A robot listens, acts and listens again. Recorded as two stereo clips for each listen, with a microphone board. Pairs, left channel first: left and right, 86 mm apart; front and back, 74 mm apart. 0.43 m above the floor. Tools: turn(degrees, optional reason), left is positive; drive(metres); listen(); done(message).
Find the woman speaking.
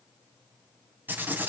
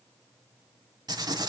listen()
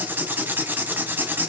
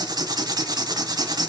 listen()
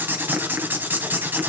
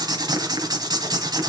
done("I can't make out a woman speaking to turn to.")